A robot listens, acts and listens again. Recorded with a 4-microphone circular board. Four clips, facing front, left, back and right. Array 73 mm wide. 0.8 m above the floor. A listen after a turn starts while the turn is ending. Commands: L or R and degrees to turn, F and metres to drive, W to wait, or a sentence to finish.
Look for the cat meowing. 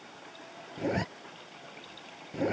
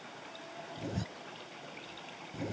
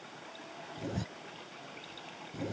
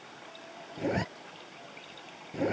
W
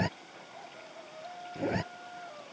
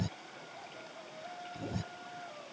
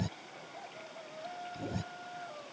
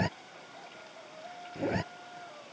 W
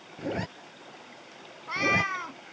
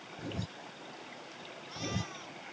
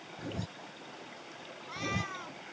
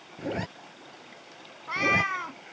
R60
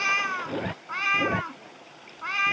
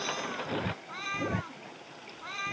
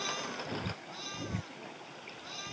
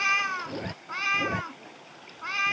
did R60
R25
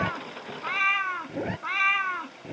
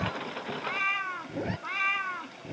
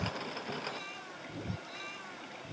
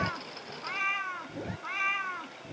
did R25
Facing the cat meowing.